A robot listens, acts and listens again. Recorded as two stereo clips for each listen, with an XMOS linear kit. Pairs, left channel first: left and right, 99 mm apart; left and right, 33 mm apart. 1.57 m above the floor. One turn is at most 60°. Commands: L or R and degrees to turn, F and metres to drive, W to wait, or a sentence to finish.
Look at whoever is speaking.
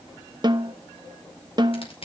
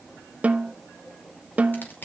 W
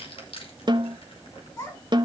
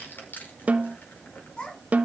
L35
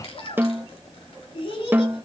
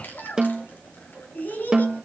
L60
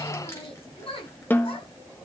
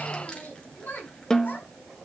L60
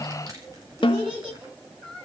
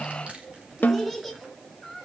Found it: a child speaking, straight ahead.